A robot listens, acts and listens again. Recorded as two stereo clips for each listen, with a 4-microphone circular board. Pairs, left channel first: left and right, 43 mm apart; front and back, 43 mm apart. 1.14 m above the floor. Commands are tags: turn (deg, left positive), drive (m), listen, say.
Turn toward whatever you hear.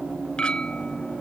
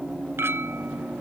<turn deg="155"/>
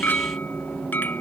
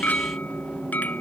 <turn deg="50"/>
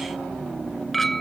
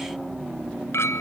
<say>Found it: a clink, straight ahead.</say>